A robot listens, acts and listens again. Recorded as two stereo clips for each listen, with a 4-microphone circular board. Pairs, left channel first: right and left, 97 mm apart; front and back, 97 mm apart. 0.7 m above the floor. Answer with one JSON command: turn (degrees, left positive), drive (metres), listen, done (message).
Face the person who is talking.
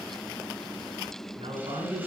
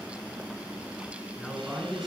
{"turn": 90}
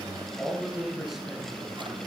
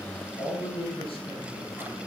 {"done": "Found it: a man speaking, straight ahead."}